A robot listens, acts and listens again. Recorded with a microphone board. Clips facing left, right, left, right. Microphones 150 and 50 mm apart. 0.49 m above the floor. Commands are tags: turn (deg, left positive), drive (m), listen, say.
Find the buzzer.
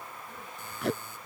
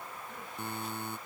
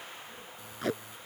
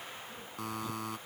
<turn deg="-65"/>
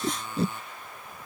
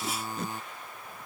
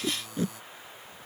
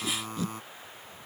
<turn deg="-40"/>
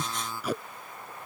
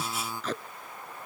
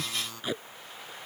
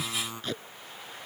<turn deg="-20"/>
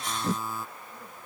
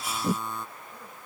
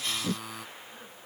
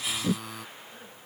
<say>Facing the buzzer.</say>